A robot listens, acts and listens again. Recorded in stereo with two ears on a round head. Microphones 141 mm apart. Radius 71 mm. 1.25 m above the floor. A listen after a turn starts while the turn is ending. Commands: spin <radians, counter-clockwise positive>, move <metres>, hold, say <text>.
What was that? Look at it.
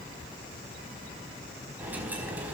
spin -0.52
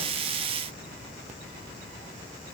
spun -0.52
hold
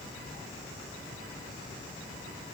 say I heard a dropped coin, but can't make it out now. It was about 20° left or 140° right.